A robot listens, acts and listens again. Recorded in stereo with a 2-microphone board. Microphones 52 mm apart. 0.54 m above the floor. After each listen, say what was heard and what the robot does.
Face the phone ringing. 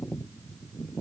Keep listening.
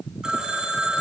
Turn 30° right.
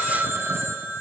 So it is at 135° right. Turn 135° right.
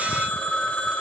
The phone ringing is now 25° left. Turn 25° left.
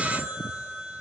The phone ringing is now 15° right. Turn 15° right.
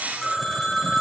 Found it: a phone ringing, straight ahead, 2 to 4 m away.